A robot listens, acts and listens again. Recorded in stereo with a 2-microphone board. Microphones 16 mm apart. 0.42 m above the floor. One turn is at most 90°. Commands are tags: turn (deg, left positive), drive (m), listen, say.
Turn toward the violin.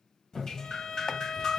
<turn deg="60"/>
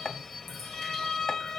<turn deg="40"/>
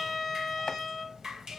<say>Facing the violin, 1 to 2 m away.</say>